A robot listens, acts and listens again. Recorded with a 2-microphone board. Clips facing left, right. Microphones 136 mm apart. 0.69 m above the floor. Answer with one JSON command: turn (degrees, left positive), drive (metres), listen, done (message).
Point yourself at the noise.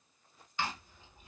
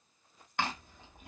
{"turn": -65}
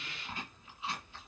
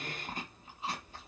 {"turn": -45}
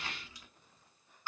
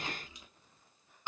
{"turn": -20}
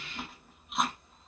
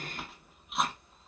{"done": "Found it: chewing, straight ahead."}